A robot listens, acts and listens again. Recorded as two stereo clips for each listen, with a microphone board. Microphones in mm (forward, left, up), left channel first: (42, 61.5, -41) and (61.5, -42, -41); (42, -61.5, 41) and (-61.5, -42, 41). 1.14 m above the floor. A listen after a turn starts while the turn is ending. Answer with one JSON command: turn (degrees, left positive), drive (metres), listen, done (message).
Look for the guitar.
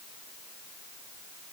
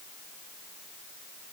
{"listen": true}
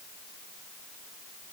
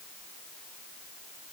{"listen": true}
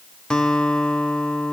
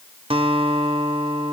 {"turn": 180}
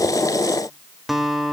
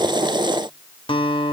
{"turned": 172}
{"turn": 10}
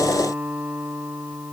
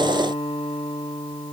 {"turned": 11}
{"done": "Facing the guitar."}